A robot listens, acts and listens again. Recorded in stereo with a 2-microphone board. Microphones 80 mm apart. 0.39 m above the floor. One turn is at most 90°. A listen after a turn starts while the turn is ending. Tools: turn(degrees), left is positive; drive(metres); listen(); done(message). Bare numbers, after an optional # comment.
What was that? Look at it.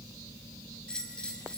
turn(30)
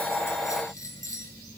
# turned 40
# So it is at 125° left.
turn(90)
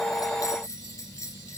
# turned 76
# The bell is now 50° left.
turn(50)
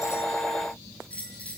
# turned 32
# The bell is now 20° left.
turn(20)
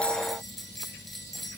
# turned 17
done("Facing the bell, 2 to 4 m away.")